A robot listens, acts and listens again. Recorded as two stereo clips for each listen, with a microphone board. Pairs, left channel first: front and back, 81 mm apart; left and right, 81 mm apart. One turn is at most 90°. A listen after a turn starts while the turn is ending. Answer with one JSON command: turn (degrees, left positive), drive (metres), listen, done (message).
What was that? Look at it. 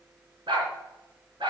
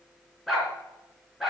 {"turn": 90}
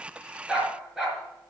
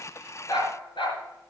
{"turn": 90}
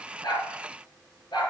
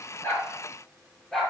{"turn": 10}
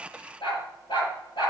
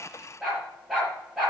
{"done": "Found it: a dog barking, straight ahead."}